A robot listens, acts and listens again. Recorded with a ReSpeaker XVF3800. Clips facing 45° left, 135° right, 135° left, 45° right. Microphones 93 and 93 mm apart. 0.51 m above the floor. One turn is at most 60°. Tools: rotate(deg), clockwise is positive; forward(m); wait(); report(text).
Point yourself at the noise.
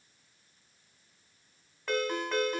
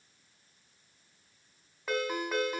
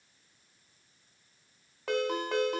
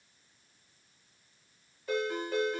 rotate(-60)
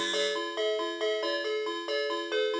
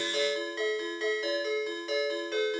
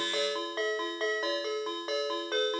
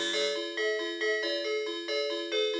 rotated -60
rotate(-60)
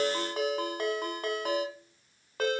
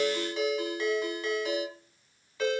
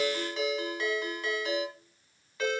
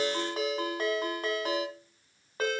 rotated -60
report("Found it: a ringtone, straight ahead, 2 to 4 m away.")